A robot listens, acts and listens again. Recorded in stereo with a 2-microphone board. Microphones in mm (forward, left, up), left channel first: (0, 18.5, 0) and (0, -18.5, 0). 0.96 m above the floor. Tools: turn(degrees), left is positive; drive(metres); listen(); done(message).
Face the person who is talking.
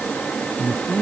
turn(degrees=55)
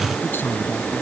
turn(degrees=70)
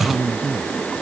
done("Found it: a man speaking, straight ahead.")